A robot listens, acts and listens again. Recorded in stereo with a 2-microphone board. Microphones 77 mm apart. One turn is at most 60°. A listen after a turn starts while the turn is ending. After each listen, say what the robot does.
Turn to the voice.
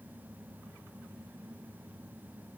Keep listening.
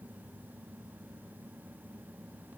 Keep listening.
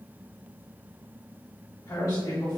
Turn 40° left.
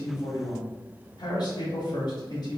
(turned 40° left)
Turn 60° left.
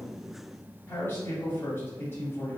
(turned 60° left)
Turn 40° left.
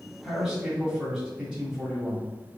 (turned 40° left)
Facing the man speaking.